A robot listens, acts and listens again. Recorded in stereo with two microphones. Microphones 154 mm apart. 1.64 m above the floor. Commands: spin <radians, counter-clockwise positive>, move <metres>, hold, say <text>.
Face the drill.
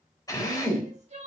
spin 0.44
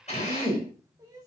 spin 2.36
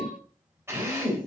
spin -0.26
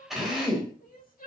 say Facing the drill, over 4 m away.